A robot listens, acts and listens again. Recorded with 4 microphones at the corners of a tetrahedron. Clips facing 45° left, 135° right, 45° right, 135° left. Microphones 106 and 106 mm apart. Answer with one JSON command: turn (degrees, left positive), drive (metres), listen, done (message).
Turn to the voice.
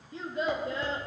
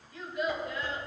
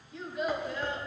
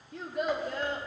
{"turn": 100}
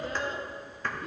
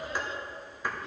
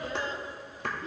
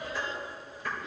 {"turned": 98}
{"done": "Found it: a child speaking, straight ahead."}